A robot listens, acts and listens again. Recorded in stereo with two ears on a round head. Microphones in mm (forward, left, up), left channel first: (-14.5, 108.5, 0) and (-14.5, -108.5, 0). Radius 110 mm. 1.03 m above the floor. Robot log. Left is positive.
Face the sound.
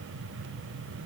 cmd idle
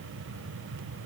cmd idle
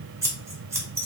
cmd yaw -30
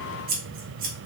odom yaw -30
note: So it is at 135° right.
cmd yaw -135
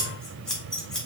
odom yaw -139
end: Found it: scissors, straight ahead.